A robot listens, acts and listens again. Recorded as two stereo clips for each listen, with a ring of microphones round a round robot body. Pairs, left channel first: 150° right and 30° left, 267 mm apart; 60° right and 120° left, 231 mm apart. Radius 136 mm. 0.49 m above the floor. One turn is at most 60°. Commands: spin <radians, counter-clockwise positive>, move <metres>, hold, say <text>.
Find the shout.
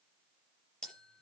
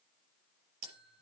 hold
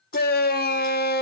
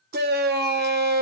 spin 1.05
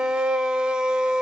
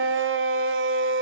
spin 1.05
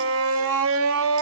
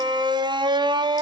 spin 0.87
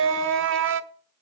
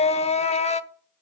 say Found it: a shout, straight ahead, 1 to 2 m away.